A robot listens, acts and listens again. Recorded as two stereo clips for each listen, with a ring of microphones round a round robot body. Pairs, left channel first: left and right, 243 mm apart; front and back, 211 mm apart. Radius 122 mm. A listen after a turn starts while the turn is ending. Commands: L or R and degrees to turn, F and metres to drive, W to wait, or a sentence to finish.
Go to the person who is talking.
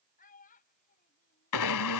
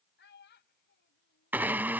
L35
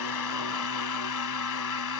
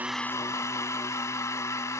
W
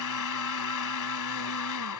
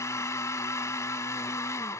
W
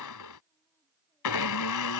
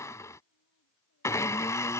I heard a child speaking from this way, but can't make it out now. I did not reach it.